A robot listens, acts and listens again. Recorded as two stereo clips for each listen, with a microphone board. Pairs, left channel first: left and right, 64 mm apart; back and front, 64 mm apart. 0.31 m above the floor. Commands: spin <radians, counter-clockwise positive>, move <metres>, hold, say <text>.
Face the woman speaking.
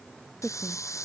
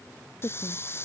spin 3.05
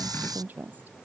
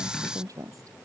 spin -0.44
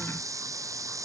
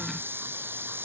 hold
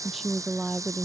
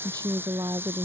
say Found it: a woman speaking, straight ahead.